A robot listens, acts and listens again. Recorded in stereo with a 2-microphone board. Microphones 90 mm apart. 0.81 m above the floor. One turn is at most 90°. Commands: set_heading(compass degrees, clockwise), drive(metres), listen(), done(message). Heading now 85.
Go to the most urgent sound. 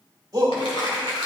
set_heading(125)
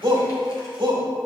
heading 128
set_heading(218)
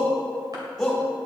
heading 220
drive(1.0)
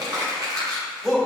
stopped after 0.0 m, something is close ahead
done("Something is in my way. I am facing the shout but have not reached it.")